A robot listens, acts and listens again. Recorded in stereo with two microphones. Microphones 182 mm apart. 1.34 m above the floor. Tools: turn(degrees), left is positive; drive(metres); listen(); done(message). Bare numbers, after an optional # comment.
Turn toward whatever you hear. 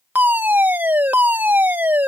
turn(-30)
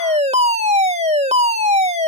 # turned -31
# So it is at 140° right.
turn(-140)
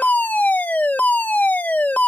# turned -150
# The fire alarm is now 10° left.
turn(10)
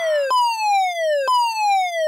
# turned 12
done("Found it: a fire alarm, straight ahead.")